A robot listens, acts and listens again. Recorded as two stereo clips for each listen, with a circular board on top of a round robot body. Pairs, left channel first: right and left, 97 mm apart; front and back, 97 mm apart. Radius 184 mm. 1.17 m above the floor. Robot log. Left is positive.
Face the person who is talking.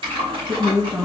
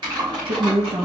note: The woman speaking: 170° left.
cmd yaw +170
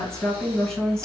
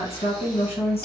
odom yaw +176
end: Found it: a woman speaking, straight ahead.